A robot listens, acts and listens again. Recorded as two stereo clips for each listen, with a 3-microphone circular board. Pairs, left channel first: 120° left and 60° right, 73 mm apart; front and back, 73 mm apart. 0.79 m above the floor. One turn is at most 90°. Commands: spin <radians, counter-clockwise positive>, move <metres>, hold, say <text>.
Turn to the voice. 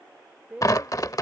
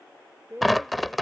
spin -1.57
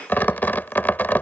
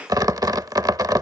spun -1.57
spin -0.79
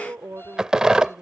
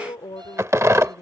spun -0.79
say Facing the woman speaking.